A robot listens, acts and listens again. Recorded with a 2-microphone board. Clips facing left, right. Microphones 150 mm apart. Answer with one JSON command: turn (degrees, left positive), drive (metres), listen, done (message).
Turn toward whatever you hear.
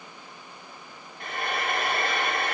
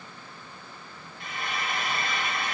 {"turn": 60}
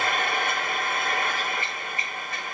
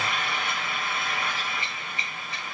{"turn": 55}
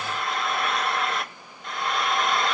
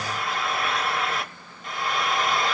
{"done": "Facing the frying."}